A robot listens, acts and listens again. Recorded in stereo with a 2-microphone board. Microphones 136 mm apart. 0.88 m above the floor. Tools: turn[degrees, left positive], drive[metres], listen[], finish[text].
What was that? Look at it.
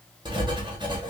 Thought: The writing: about 35° right or 145° right.
Action: turn[-35]
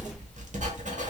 Thought: So it is at 105° right.
Action: turn[-105]
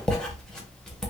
Action: finish[Facing the writing.]